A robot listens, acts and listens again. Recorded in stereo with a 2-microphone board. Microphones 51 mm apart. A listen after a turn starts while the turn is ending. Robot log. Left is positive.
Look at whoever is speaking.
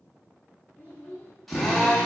note: The child speaking: about 30° left or 150° left.
cmd yaw +30
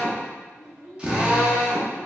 note: So it is at 15° right.
cmd yaw -15
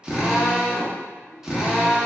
cmd idle
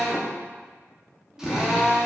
cmd idle
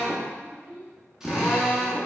note: The child speaking is now 65° right.
cmd yaw -65
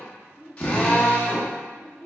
note: The child speaking is now 40° right.
cmd yaw -40
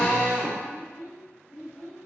note: The child speaking is now 10° right.
cmd yaw -10
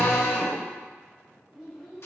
end: Found it: a child speaking, straight ahead.